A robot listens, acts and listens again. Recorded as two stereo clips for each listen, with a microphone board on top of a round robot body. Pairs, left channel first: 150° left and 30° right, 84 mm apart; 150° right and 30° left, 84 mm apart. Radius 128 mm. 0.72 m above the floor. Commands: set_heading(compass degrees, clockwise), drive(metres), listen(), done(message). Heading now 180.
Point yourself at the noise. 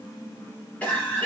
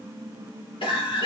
set_heading(315)
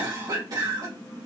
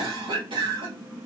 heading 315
set_heading(300)
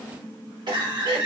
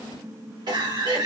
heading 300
done("Found it: a cough, straight ahead.")